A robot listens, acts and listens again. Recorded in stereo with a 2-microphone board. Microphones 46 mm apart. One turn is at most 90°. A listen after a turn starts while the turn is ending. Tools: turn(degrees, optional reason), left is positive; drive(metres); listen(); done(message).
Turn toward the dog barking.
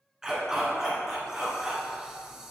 turn(degrees=-30)
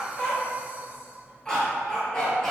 turn(degrees=10, reason="So it is at 10° left.")
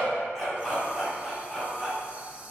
done("Facing the dog barking, 2 to 4 m away.")